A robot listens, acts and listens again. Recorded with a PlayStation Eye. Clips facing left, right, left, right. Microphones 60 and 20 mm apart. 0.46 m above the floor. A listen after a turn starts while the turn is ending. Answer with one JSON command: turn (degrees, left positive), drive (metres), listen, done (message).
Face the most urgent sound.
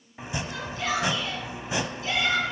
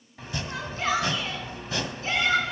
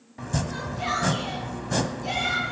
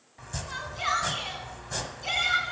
{"turn": -35}
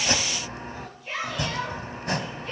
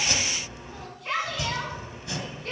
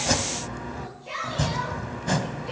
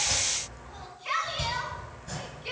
{"turn": -110}
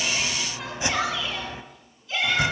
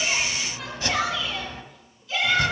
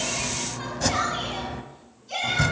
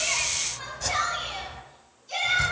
{"done": "Facing the shout."}